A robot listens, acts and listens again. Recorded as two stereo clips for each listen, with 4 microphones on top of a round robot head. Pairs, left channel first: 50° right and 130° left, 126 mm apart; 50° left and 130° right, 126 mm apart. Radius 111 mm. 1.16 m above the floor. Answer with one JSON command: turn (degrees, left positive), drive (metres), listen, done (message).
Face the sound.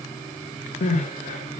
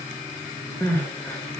{"turn": -25}
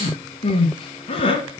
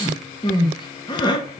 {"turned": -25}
{"done": "Facing the crying, 1 to 2 m away."}